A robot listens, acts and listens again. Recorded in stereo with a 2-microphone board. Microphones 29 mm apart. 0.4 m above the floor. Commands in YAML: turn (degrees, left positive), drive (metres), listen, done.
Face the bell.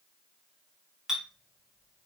listen: true
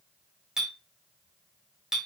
listen: true
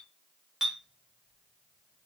done: "I can't make out a bell, only a clink."